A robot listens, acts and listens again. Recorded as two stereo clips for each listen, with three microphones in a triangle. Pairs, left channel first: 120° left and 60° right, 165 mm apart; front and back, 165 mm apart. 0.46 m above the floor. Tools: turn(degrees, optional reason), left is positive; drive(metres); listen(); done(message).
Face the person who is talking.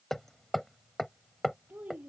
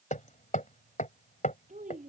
turn(degrees=-140, reason="The child speaking: 140° right.")
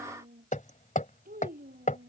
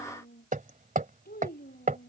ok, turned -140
turn(degrees=-30, reason="The child speaking is now 30° right.")
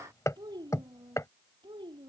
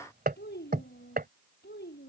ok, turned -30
done("Facing the child speaking.")